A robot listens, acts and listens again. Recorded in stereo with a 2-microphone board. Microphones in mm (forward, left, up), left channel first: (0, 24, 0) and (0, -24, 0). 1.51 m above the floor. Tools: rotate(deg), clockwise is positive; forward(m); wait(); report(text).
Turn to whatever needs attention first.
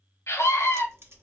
rotate(-90)
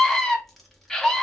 rotate(-10)
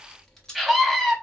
report("Found it: a scream, straight ahead.")